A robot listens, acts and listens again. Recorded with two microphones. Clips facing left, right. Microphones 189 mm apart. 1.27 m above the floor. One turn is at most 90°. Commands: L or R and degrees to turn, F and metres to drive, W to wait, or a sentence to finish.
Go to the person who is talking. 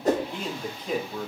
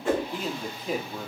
R30
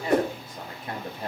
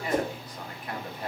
L25
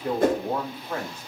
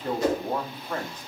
L10
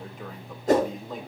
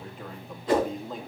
F1.0
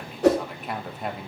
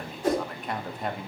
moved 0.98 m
F1.0
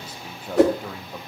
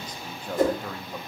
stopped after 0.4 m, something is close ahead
I am next to the man speaking.